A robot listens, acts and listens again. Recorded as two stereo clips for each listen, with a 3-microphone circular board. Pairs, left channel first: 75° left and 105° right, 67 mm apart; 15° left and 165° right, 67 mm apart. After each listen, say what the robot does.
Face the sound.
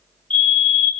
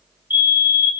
Turn 140° left.
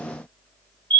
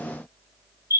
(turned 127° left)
Turn 10° left.
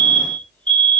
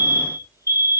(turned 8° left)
Found it: a fire alarm, straight ahead.